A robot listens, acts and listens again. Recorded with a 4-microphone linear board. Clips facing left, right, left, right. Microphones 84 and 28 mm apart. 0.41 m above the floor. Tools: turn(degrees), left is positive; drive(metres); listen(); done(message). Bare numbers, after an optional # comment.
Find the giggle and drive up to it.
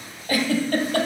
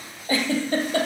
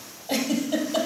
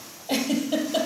# The giggle: about 20° right or 160° right.
turn(-20)
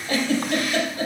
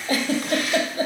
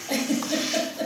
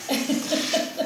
# So it is at 140° right.
turn(-140)
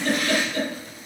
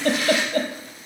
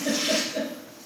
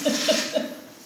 # The giggle is now 40° right.
turn(-40)
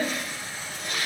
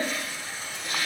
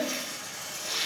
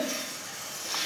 listen()
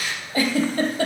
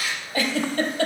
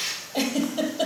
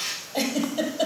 # The giggle is now 15° left.
turn(15)
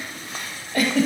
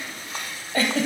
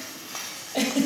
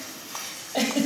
drive(1.0)
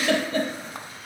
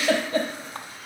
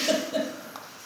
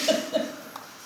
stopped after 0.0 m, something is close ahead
done("Blocked. The giggle is further on, straight ahead.")